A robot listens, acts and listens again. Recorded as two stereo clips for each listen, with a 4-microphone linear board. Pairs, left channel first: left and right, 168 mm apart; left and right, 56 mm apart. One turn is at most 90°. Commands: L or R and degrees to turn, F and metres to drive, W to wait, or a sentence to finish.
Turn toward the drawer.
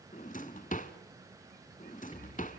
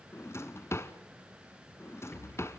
L50
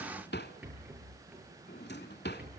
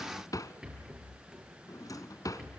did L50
L80
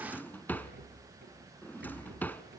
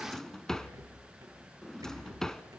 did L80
L10
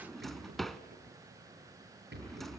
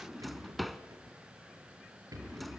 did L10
Found it: a drawer, straight ahead.